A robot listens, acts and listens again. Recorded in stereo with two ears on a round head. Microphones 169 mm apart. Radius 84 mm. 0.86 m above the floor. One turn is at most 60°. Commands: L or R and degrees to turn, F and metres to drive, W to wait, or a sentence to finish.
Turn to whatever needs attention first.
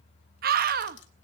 R55
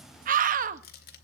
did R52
R60
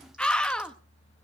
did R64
Facing the scream.